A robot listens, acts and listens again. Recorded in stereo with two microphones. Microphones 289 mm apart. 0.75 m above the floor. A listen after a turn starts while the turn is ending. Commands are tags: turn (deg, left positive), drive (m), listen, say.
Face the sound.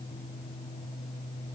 <listen/>
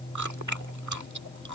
<turn deg="-90"/>
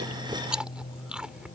<say>Found it: chewing, straight ahead.</say>